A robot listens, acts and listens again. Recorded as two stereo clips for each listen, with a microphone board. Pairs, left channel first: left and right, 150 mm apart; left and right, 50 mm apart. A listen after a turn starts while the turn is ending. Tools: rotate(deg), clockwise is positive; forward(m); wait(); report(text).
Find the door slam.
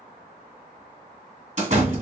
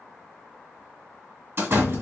rotate(45)
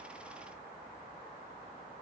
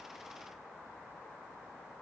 wait()
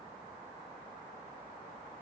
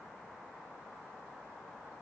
report("I heard a door slam, but can't make it out now. It was about straight ahead or 90° right.")